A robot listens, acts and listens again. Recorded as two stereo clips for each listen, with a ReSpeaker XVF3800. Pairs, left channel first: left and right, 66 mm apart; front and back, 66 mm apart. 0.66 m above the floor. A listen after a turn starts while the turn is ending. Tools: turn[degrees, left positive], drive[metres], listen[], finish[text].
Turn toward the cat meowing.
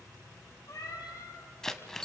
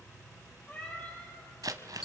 Thought: The cat meowing: 60° left.
Action: turn[60]
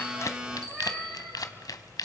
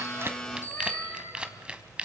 Action: listen[]
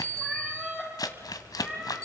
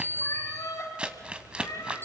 Thought: The cat meowing is now 20° right.
Action: turn[-20]
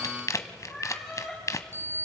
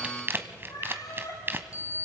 Action: finish[Found it: a cat meowing, straight ahead.]